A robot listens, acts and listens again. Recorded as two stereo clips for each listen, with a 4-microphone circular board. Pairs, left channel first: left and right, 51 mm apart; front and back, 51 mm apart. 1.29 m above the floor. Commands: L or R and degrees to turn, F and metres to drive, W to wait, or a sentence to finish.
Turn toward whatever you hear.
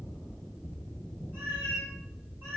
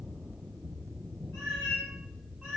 R120
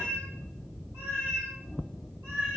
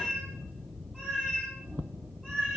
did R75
R65
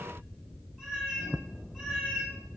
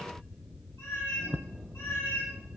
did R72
Found it: a cat meowing, straight ahead, 2 to 4 m away.